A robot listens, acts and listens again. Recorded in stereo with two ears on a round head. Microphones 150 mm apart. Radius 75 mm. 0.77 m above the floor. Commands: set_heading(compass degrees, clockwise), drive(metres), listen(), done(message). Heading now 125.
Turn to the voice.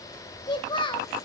set_heading(95)
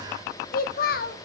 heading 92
set_heading(337)
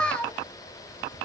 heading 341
done("Facing the child speaking.")